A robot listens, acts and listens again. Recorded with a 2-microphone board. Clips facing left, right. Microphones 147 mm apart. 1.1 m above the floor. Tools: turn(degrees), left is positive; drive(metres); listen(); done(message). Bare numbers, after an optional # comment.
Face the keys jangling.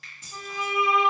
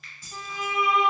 # The keys jangling: about 20° left or 160° left.
turn(20)
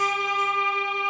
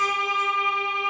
listen()
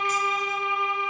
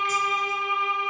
listen()
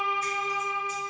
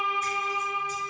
done("I heard keys jangling, but can't make it out now. It was about straight ahead or 140° left.")